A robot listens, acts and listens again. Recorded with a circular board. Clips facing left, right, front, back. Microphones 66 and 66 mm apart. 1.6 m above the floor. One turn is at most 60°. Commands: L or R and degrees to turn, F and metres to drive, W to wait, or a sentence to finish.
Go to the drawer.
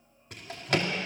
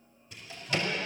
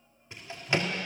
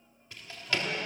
L60
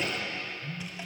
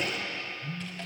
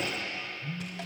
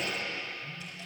L10
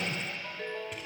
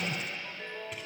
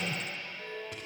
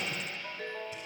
W
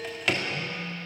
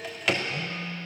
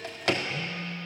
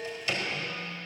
F1.0
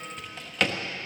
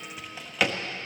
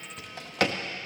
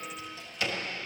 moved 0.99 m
F1.0
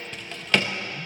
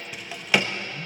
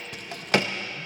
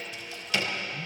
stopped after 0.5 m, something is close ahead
R10
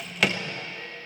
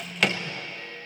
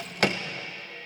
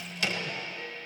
Arrived at the drawer, straight ahead.